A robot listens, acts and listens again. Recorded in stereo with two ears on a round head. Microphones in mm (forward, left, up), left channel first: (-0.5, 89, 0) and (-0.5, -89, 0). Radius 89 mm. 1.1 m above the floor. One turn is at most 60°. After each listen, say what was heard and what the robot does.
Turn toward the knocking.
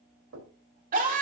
Turn 60° right.
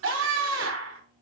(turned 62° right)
Nothing new. It was at 30° right. Turn 30° right.
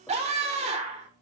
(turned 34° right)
Keep listening.
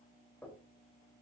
The knocking is now 10° left. Turn 10° left.
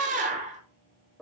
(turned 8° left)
Facing the knocking, 2 to 4 m away.